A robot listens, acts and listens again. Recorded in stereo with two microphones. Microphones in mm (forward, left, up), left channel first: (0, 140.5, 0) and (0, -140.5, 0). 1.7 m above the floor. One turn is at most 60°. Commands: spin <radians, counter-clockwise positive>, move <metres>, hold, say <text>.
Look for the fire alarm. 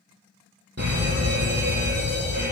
spin -1.05
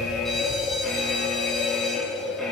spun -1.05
say Found it: a fire alarm, straight ahead.